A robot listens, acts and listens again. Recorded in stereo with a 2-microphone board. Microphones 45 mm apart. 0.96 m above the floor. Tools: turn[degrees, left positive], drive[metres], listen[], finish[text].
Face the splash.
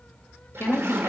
Action: turn[-90]
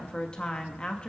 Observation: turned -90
Action: finish[Facing where the splash came from. I can't hear it now.]